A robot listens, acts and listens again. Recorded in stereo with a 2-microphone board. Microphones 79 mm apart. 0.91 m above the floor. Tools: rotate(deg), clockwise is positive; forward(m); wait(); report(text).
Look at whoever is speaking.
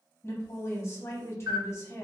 rotate(-35)
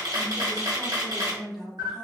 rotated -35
report("Found it: a woman speaking, straight ahead, under 1 m away.")